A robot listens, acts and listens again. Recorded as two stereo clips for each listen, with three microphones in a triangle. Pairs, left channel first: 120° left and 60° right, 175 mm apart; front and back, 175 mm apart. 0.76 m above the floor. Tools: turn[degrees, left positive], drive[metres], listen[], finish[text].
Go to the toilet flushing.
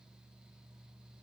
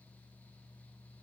Action: listen[]
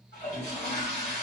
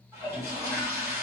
Thought: The toilet flushing: 110° left.
Action: turn[110]
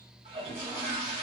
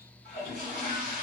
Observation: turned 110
Thought: The toilet flushing is now 15° right.
Action: turn[-15]
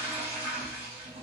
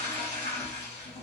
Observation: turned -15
Action: drive[1.0]
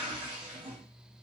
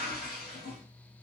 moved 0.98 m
Action: drive[1.0]
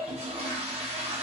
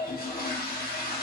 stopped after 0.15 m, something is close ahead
Thought: The toilet flushing is now 10° right.
Action: turn[-10]
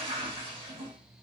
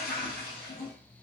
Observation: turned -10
Action: finish[Arrived at the toilet flushing, straight ahead.]